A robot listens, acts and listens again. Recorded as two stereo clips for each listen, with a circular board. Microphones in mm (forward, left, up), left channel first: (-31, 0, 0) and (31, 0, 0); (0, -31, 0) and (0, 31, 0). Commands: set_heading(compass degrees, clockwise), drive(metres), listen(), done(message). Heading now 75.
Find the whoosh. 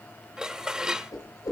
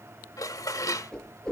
set_heading(240)
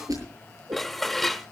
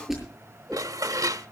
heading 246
done("Facing the whoosh, over 4 m away.")